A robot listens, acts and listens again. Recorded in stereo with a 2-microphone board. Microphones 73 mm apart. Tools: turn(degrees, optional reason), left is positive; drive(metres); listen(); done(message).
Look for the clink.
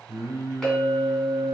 turn(degrees=30)
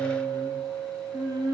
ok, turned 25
turn(degrees=-25, reason="So it is at 25° right.")
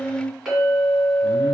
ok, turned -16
done("Facing the clink, 1 to 2 m away.")